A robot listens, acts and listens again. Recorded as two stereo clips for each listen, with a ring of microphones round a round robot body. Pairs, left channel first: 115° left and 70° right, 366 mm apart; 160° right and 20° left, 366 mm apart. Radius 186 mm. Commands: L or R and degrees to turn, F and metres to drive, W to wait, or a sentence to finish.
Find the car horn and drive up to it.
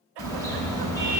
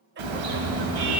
L30
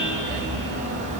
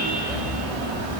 F1.0
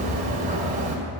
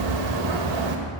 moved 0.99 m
F1.0
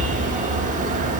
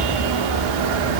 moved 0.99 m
F1.0
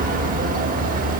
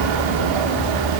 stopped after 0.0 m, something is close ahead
I am next to the car horn.